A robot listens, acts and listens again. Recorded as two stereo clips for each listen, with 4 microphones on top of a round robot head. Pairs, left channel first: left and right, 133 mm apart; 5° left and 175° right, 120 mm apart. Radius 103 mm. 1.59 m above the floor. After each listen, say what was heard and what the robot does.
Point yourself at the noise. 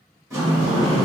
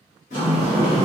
The sliding door: 25° right. Turn 25° right.
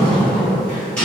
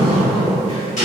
The sliding door is now 10° left. Turn 10° left.
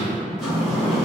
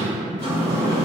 Found it: a sliding door, straight ahead, 1 to 2 m away.